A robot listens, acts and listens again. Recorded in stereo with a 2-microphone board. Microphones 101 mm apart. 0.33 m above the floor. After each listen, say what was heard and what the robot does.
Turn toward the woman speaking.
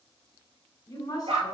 The woman speaking: about 35° left or 145° left. Turn 35° left.
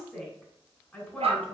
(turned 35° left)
So it is at 15° left. Turn 15° left.
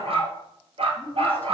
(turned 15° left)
The woman speaking is now 15° left. Turn 15° left.
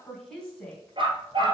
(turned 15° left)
The woman speaking is now 10° left. Turn 10° left.
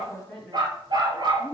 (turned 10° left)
Facing the woman speaking, 2 to 4 m away.